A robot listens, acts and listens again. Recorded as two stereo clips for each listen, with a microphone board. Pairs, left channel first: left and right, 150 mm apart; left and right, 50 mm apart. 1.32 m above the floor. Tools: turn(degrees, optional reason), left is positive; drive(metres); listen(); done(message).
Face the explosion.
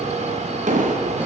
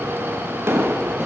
turn(degrees=-55, reason="The explosion: about 55° right or 125° right.")
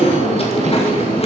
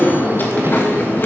listen()
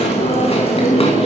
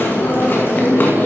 done("I heard an explosion, but can't make it out now. It was about straight ahead or 70° right.")